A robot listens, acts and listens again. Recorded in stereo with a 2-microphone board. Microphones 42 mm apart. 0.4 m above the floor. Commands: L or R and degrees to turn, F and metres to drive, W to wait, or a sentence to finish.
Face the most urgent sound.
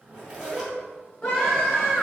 L20
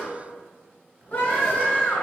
L135
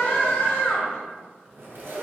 L55
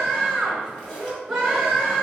R20
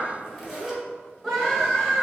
Facing the scream, 1 to 2 m away.